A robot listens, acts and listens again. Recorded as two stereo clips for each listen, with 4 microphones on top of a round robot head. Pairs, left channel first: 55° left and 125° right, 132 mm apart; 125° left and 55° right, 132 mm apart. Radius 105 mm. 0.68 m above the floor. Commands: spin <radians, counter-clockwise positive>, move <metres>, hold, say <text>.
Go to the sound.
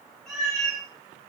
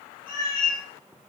spin 2.44
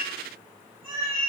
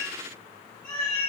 spin 1.05
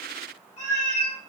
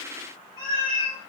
spin 0.35
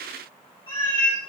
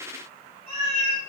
move 1.0
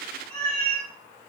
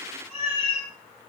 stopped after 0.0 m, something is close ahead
spin -0.17
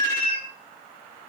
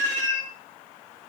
say Blocked. The cat meowing is further on, straight ahead.